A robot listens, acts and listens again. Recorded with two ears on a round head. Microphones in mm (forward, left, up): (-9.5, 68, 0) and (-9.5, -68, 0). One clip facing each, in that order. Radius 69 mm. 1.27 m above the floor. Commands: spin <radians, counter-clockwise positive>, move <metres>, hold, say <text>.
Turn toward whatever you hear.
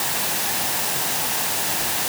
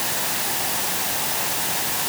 hold
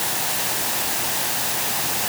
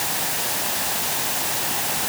hold
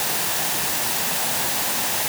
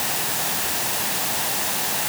say I can't make out anything to turn to.